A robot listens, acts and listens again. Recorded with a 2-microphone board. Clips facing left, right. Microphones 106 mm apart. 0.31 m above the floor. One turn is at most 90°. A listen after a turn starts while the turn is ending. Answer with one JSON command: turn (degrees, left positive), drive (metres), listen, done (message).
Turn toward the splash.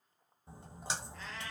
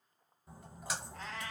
{"turn": 30}
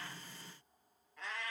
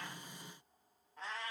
{"listen": true}
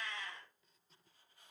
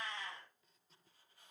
{"done": "I heard a splash, but can't make it out now. It was about straight ahead or 120° left."}